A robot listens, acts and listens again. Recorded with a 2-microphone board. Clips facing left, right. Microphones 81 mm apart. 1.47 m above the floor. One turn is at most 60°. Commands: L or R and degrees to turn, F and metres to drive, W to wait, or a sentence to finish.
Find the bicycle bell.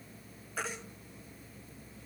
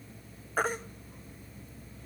W
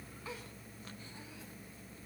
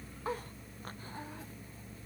W
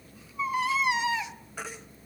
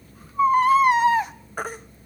I can't make out a bicycle bell, only a baby crying.